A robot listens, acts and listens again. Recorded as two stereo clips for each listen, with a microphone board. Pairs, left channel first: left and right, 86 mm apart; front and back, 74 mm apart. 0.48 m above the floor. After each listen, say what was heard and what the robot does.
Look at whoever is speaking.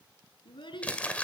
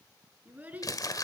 The child speaking: 110° left. Turn 110° left.
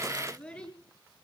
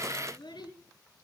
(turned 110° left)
The child speaking is now 10° left. Turn 10° left.
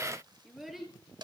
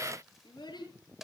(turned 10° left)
Found it: a child speaking, straight ahead, over 4 m away.